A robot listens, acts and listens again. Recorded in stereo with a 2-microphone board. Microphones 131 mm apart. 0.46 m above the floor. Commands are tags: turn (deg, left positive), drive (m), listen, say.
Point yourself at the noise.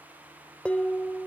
<turn deg="30"/>
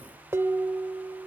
<turn deg="-20"/>
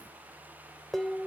<say>Found it: dishes clattering, straight ahead, under 1 m away.</say>